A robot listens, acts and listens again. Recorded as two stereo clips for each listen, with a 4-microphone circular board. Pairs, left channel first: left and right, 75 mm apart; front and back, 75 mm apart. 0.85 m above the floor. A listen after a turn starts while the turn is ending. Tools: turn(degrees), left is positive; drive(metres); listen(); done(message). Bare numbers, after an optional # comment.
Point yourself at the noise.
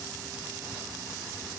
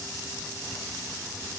listen()
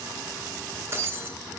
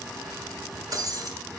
# The breaking glass: 150° right.
turn(-150)
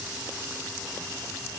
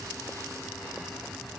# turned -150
done("Facing where the breaking glass came from. I can't hear it now.")